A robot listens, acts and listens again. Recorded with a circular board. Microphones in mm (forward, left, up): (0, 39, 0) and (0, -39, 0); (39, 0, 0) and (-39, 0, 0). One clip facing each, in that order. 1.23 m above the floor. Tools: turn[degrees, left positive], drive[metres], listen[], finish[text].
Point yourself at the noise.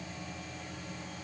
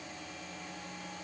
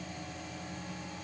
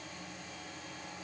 Action: listen[]
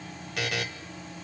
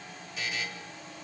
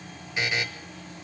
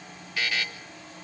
Thought: The buzzer: 70° left.
Action: turn[70]
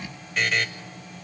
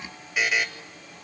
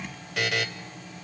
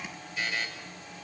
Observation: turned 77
Thought: The buzzer is now 10° right.
Action: turn[-10]
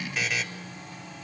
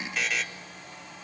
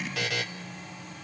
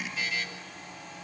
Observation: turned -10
Action: finish[Facing the buzzer, 1 to 2 m away.]